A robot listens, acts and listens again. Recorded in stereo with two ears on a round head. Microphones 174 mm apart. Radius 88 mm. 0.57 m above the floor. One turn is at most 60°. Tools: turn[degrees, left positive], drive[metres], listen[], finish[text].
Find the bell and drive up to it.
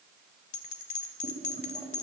Thought: The bell: about 40° left or 140° left.
Action: turn[40]
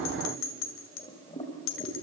Thought: So it is at 100° left.
Action: turn[60]
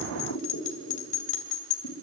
Thought: The bell is now 40° left.
Action: turn[40]
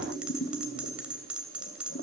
Action: drive[1.0]
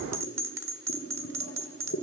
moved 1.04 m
Thought: The bell is now 15° right.
Action: turn[-15]
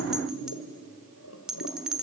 Action: drive[1.0]
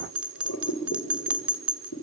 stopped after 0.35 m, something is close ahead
Thought: The bell is now 10° right.
Action: turn[-10]
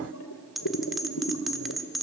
Action: finish[Arrived at the bell, straight ahead.]